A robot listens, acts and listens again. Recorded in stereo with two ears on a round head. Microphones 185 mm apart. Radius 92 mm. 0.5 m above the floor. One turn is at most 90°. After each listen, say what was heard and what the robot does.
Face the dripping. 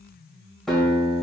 Keep listening.
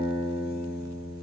Keep listening.
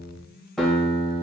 I can't make out dripping, only a guitar.